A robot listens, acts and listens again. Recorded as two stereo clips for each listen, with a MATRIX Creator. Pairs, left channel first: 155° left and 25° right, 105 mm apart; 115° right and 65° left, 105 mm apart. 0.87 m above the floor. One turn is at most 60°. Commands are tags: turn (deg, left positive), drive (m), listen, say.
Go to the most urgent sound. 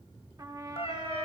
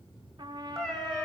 <listen/>
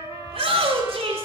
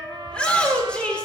<turn deg="-35"/>
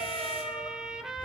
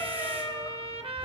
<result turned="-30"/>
<listen/>
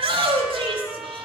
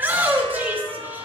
<drive m="1.0"/>
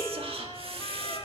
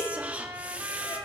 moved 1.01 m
<turn deg="-10"/>
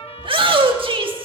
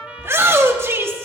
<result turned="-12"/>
<drive m="1.0"/>
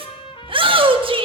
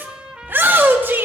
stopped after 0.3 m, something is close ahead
<say>I am next to the shout.</say>